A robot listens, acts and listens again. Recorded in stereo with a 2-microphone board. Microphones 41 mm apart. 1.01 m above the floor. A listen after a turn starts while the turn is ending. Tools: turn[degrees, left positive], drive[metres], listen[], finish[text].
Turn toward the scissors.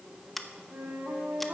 Action: turn[30]
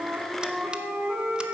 Action: listen[]
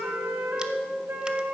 Action: listen[]
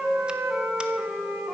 Action: finish[I heard scissors, but can't make it out now. It was about 25° right or 145° left.]